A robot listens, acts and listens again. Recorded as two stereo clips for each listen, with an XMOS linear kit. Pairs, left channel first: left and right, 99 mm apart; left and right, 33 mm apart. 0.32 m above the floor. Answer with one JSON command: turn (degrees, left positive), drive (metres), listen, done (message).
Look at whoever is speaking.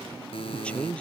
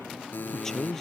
{"turn": 30}
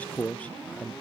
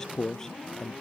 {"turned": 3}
{"turn": 30}
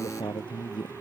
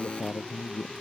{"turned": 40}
{"turn": 125}
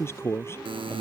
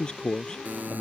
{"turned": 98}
{"turn": 25}
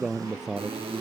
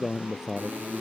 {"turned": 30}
{"done": "Found it: a man speaking, straight ahead."}